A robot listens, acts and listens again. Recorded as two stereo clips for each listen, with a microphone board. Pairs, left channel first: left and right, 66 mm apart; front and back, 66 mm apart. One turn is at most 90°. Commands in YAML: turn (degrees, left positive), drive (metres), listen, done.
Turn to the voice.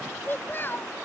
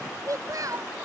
turn: 90
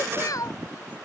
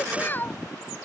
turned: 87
turn: 60
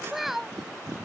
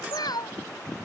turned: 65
done: "Facing the child speaking."